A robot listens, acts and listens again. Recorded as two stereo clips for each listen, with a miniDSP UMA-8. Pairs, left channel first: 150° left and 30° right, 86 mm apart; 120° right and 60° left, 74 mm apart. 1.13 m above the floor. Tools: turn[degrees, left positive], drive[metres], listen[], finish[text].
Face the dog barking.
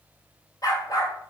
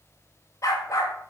Thought: The dog barking: 165° right.
Action: turn[-165]
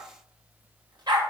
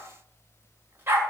Action: finish[Found it: a dog barking, straight ahead.]